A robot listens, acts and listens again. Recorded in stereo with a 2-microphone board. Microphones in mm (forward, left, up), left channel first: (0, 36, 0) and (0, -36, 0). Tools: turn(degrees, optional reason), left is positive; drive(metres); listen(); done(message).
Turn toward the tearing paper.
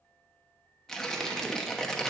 turn(degrees=30)
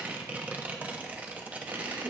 turn(degrees=-20, reason="So it is at 20° right.")
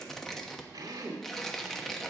done("Facing the tearing paper.")